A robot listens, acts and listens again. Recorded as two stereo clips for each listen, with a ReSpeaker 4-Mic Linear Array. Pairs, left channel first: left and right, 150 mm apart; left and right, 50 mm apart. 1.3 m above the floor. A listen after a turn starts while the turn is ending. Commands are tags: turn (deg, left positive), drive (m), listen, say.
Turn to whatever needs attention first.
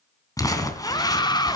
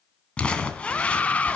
<turn deg="30"/>
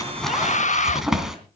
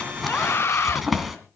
<turn deg="120"/>
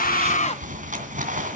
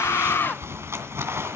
<listen/>
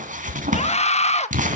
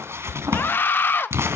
<turn deg="50"/>
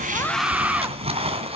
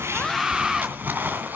<turn deg="-10"/>
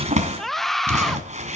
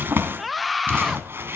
<say>Facing the scream, 1 to 2 m away.</say>